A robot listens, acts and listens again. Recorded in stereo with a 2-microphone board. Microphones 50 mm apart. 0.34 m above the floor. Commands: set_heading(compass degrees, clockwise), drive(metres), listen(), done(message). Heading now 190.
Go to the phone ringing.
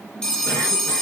set_heading(160)
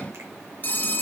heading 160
set_heading(25)
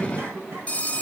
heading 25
set_heading(355)
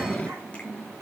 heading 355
listen()
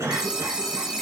set_heading(10)
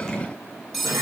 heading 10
drive(1.0)
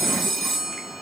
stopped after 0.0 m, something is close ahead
done("Something is in my way. I am facing the phone ringing but have not reached it.")